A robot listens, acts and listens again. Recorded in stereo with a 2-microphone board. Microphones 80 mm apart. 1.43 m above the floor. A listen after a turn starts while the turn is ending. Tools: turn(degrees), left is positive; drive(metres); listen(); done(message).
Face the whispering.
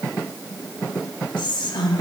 turn(degrees=75)
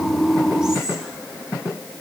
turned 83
listen()
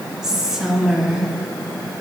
done("Facing the whispering, 1 to 2 m away.")